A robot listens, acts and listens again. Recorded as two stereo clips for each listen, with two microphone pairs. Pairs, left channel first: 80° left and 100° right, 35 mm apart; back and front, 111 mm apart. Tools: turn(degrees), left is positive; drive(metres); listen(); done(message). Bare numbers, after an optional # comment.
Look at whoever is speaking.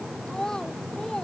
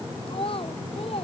# The child speaking: 150° left.
turn(150)
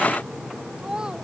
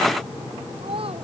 # The child speaking is now 30° right.
turn(-30)
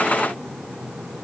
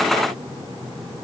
listen()
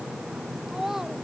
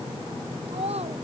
# The child speaking is now 20° right.
turn(-20)
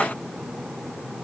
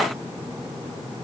listen()
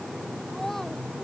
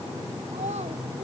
listen()
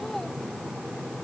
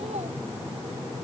done("I heard a child speaking from this way, but can't make it out now.")